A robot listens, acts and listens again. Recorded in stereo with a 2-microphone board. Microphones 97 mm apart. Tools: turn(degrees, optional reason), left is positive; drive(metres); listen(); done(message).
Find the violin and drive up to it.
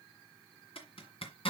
listen()
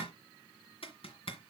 listen()
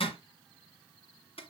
done("I can't make out a violin to turn to.")